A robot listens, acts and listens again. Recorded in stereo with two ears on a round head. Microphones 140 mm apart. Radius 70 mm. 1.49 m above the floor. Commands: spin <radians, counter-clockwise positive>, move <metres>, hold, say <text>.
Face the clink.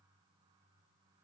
hold
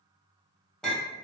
spin 0.52
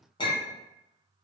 spin 2.53
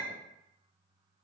hold
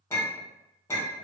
spin 0.26
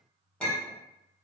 say Facing the clink.